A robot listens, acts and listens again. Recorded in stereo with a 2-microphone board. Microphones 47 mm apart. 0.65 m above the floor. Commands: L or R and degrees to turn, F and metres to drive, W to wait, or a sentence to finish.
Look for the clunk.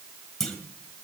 L30
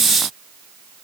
W
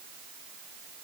I heard a clunk, but can't make it out now. It was about 20° right or 140° left.